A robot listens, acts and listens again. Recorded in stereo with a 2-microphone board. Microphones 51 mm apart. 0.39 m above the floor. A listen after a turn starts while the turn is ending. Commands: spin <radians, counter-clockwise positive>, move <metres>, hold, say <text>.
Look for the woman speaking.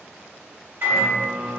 hold
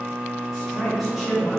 spin -0.52
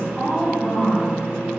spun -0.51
spin -0.52
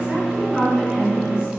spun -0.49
spin -0.35
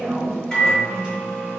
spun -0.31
hold
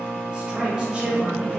spin -0.35
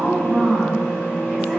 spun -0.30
spin -0.52
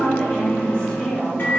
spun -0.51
spin 0.35
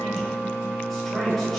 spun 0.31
say Facing the woman speaking, 1 to 2 m away.